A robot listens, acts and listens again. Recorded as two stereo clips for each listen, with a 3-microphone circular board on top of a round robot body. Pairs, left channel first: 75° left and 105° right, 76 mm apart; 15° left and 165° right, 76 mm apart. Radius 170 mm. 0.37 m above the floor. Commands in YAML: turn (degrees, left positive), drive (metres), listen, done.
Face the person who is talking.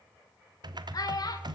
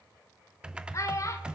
turn: 55
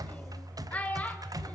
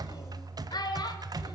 done: "Facing the child speaking."